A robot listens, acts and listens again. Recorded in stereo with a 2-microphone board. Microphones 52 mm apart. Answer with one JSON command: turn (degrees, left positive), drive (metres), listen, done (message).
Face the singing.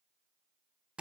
{"listen": true}
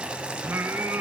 {"turn": -50}
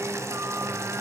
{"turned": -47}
{"listen": true}
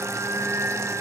{"turn": -70}
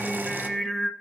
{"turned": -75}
{"done": "Found it: singing, straight ahead, under 1 m away."}